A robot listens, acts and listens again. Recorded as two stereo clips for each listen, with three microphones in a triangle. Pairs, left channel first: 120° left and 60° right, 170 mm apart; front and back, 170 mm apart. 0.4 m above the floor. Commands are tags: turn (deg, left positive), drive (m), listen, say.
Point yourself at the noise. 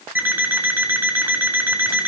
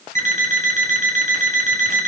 <turn deg="-140"/>
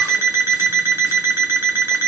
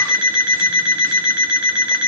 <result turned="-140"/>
<turn deg="15"/>
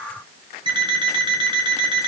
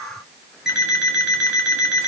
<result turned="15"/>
<say>Found it: an alarm clock, straight ahead, 2 to 4 m away.</say>